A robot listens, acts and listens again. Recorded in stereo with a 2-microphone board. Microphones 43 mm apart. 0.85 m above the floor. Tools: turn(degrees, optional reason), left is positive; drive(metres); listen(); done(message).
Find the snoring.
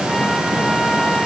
listen()
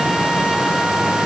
listen()
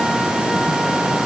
done("I can't make out snoring to turn to.")